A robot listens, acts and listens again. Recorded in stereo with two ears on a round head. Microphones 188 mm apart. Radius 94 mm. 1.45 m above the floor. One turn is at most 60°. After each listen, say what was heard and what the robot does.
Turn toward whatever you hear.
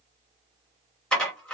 Turn 30° left.
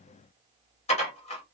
So it is at 145° left. Turn 60° left.
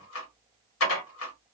The dishes clattering is now 100° left. Turn 60° left.
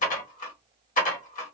The dishes clattering is now 40° left. Turn 40° left.
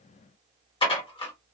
The dishes clattering is now 25° left. Turn 25° left.
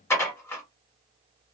The dishes clattering is now 15° left. Turn 15° left.
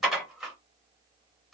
Facing the dishes clattering.